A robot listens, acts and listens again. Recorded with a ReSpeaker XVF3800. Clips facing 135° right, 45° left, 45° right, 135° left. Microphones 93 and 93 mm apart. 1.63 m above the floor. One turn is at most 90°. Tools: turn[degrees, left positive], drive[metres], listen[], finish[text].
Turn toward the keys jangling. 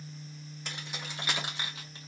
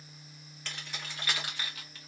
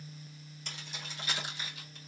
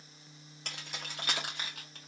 Thought: The keys jangling: 160° left.
Action: turn[90]
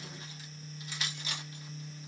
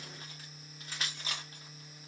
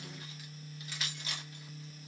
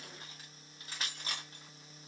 Thought: The keys jangling is now 90° left.
Action: turn[90]
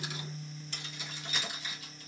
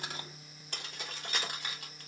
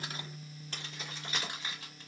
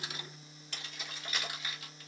Thought: The keys jangling is now 10° left.
Action: turn[10]
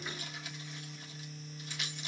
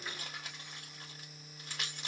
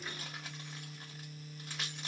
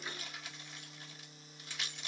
Action: finish[Found it: keys jangling, straight ahead, 2 to 4 m away.]